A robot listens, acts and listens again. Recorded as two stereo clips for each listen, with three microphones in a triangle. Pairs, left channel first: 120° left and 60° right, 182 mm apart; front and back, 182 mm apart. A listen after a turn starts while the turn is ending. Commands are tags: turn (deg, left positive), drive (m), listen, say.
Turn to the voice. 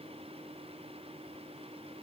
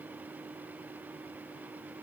<listen/>
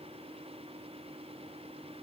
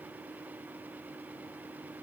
<listen/>
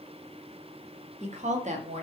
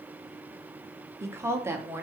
<turn deg="-105"/>
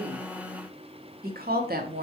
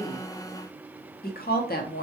<turn deg="-30"/>
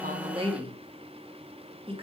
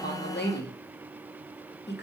<say>Facing the woman speaking, under 1 m away.</say>